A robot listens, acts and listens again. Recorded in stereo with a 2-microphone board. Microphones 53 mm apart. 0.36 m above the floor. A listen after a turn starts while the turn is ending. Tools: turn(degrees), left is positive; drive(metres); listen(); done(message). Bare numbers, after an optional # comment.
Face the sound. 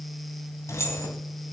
# The keys jangling: about 60° left or 120° left.
turn(60)
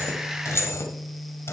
# So it is at 55° left.
turn(55)
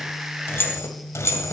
# The keys jangling is now 60° left.
turn(60)
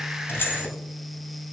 listen()
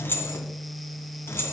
# The keys jangling is now 50° left.
turn(50)
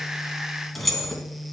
done("Facing the keys jangling.")